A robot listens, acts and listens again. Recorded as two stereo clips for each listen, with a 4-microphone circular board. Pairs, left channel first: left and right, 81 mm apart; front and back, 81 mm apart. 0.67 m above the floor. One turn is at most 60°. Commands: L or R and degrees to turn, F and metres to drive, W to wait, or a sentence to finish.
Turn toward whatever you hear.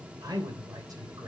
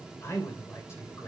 R50
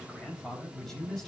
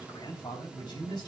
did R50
Facing the man speaking, over 4 m away.